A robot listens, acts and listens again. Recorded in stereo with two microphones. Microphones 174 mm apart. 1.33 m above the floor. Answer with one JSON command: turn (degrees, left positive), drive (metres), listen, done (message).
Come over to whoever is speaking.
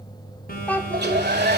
{"turn": 30}
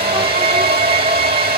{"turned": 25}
{"listen": true}
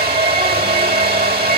{"listen": true}
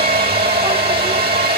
{"done": "I heard a child speaking, but can't make it out now. It was about 15° right or 145° left. I did not reach it."}